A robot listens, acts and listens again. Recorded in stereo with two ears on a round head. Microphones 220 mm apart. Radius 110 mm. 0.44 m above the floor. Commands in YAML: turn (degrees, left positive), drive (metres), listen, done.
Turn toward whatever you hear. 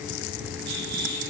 turn: -40
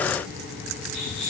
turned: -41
done: "Facing the rattle."